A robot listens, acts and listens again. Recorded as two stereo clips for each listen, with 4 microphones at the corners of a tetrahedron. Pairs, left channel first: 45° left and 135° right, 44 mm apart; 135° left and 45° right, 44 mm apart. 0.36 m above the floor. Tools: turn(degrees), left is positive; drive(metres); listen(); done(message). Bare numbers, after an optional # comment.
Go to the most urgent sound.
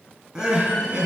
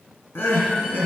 # The crying: 150° left.
turn(150)
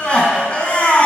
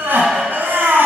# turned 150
# The crying is now 20° right.
turn(-20)
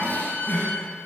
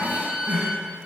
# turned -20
drive(1.0)
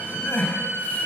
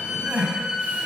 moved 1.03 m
drive(1.0)
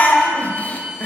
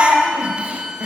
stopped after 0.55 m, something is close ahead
done("Arrived at the crying, straight ahead.")